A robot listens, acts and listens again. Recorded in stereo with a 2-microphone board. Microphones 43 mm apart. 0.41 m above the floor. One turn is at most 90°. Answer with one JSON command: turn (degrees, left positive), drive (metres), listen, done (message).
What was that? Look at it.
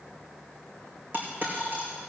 {"turn": -45}
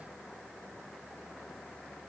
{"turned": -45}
{"listen": true}
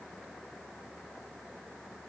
{"done": "I heard a dropped coin, but can't make it out now. It was about straight ahead or 90° right."}